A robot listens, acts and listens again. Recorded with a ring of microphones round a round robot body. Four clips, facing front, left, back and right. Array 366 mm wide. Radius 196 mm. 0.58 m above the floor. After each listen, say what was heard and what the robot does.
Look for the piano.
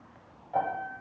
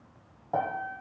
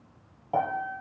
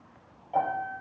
The piano: 140° left. Turn 140° left.
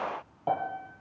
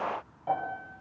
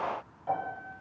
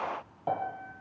The piano is now 35° right. Turn 35° right.
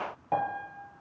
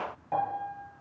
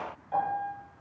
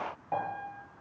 Found it: a piano, straight ahead.